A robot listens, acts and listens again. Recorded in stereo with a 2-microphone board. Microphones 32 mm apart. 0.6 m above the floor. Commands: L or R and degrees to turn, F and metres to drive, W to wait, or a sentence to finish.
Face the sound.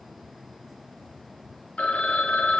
L45
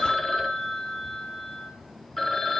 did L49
L10
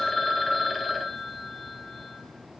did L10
Found it: a phone ringing, straight ahead, under 1 m away.